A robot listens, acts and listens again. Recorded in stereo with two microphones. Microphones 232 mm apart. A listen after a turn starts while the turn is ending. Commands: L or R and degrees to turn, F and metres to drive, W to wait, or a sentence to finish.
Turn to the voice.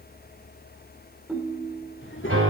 L60
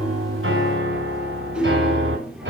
W
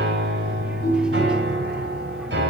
W
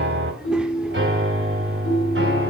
I heard a child speaking, but can't make it out now. It was about straight ahead or 60° left.